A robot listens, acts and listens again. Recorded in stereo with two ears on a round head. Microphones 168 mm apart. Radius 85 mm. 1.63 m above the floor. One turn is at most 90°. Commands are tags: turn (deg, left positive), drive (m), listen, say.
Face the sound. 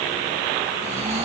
<turn deg="-35"/>
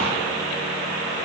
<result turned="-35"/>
<listen/>
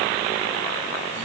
<listen/>
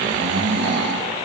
<turn deg="-90"/>
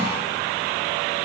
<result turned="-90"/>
<turn deg="-20"/>
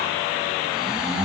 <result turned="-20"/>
<say>Facing the snoring.</say>